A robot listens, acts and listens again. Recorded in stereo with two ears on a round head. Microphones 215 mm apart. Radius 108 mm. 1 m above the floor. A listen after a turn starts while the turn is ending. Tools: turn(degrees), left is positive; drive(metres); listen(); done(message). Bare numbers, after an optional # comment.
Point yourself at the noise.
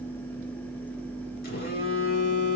# The phone buzzing: about 40° left or 140° left.
turn(40)
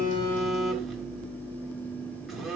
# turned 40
done("Found it: a phone buzzing, straight ahead, 1 to 2 m away.")